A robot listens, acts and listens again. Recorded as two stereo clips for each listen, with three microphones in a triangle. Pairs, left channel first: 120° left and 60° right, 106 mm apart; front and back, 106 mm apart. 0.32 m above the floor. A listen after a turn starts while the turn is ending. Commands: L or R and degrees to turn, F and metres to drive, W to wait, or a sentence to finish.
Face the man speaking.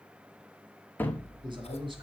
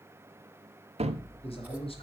R25
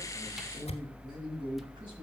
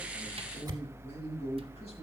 R15
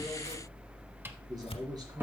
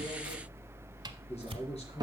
W
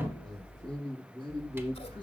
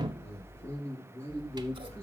R15
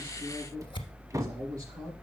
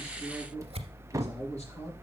Facing the man speaking.